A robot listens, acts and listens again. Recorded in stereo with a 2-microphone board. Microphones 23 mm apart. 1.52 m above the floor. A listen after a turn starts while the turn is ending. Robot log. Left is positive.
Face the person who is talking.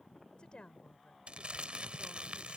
note: The woman speaking: about 50° left or 130° left.
cmd yaw +50
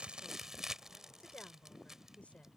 note: So it is at 80° left.
cmd yaw +80
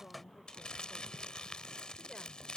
cmd idle
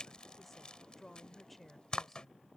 end: Facing the woman speaking.